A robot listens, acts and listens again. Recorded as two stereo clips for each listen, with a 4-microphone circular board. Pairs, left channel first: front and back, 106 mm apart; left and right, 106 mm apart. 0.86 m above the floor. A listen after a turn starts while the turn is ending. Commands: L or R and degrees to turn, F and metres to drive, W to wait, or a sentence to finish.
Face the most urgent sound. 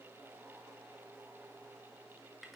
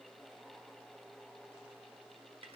W
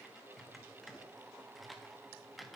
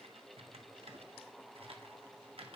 W
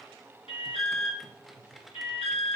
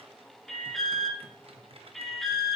Facing the alarm.